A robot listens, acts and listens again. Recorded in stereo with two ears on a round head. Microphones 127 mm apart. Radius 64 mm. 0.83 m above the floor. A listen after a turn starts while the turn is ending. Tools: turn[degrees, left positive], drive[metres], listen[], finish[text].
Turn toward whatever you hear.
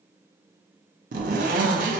Thought: The zipper: about 70° right or 110° right.
Action: turn[-70]
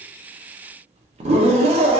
Thought: So it is at 40° right.
Action: turn[-40]
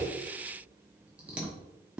Action: finish[Found it: a zipper, straight ahead.]